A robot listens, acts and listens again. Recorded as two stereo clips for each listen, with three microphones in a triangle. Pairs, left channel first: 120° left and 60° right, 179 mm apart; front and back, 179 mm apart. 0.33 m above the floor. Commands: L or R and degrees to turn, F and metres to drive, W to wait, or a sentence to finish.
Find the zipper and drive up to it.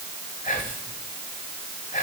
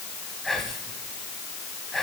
W
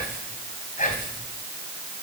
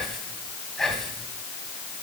W
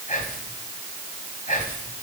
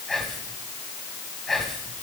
I can't make out a zipper, only whispering.